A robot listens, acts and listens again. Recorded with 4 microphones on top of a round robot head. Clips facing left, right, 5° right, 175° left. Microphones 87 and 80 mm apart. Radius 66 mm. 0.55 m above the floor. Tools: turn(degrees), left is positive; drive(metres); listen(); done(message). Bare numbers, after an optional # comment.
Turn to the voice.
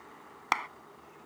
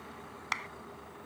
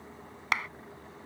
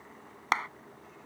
listen()
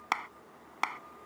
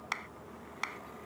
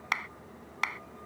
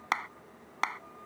listen()
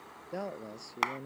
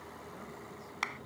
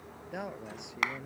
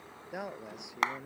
# The man speaking: 90° left.
turn(90)
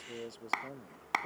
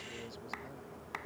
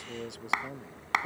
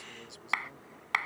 # The man speaking is now 30° left.
turn(30)
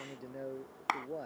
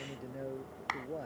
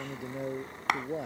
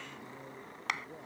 done("Facing the man speaking.")